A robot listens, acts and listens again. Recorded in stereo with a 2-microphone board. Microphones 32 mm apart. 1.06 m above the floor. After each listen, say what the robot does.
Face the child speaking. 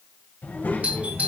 Turn 90° left.
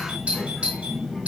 Turn 10° right.
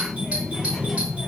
Facing the child speaking, over 4 m away.